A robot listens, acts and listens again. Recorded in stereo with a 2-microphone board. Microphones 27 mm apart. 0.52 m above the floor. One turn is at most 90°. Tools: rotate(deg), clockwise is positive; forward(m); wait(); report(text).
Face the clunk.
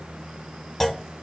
rotate(-30)
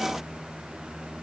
wait()
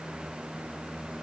report("I heard a clunk, but can't make it out now. It was about 20° right or 140° left.")